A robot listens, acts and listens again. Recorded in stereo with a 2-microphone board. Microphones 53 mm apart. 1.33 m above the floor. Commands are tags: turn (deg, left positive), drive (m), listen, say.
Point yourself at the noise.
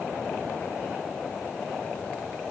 <listen/>
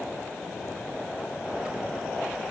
<listen/>
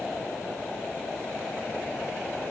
<say>I can't make out anything.</say>